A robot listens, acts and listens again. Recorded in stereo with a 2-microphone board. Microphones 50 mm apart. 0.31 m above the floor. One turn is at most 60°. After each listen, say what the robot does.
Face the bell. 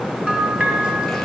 Turn 15° right.
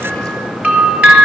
Turn 60° right.
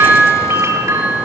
Turn 60° right.
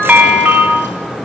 Turn 20° right.
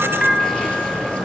Found it: a bell, straight ahead.